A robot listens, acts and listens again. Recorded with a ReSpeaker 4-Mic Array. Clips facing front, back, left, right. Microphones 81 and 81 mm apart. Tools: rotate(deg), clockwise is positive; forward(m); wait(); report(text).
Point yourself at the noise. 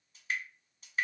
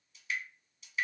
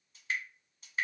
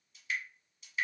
rotate(-45)
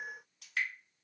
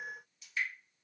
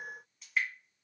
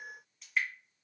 report("Facing the dripping.")